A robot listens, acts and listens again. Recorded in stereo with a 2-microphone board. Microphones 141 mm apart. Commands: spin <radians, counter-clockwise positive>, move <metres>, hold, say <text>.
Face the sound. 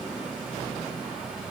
hold
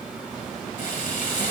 spin 1.22
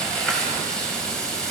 say Found it: frying, straight ahead, over 4 m away.